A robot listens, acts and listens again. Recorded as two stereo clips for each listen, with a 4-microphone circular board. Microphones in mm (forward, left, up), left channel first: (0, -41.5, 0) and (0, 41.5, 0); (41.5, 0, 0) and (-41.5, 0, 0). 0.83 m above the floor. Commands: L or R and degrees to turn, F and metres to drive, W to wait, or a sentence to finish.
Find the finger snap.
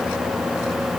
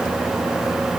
W
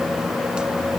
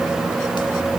W
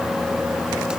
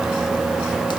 I can't make out a finger snap.